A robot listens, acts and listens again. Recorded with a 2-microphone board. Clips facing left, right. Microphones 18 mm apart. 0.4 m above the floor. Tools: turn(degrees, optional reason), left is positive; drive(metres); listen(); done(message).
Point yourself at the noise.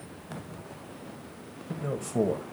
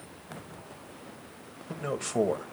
turn(degrees=-45, reason="The man speaking: about 45° right or 135° right.")
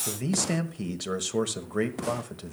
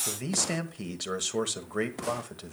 turn(degrees=-10, reason="So it is at 10° right.")
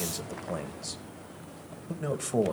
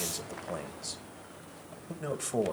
done("Found it: a man speaking, straight ahead, 1 to 2 m away.")